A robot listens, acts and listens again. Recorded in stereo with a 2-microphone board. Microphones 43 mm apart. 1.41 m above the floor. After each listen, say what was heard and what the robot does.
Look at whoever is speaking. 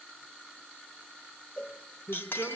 The woman speaking: about 55° left or 125° left. Turn 55° left.
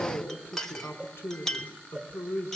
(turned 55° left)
So it is at 70° left. Turn 70° left.
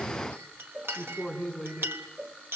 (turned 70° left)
The woman speaking is now 10° right. Turn 10° right.
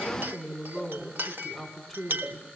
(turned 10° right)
Found it: a woman speaking, straight ahead, over 4 m away.